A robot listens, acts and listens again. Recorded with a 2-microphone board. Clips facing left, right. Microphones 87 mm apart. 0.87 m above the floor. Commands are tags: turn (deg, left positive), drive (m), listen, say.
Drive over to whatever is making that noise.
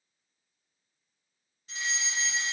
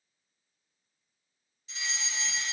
<turn deg="45"/>
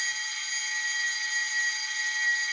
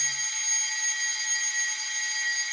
<drive m="1.0"/>
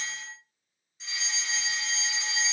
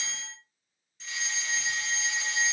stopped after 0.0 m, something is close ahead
<say>Blocked. The fire alarm is further on, straight ahead.</say>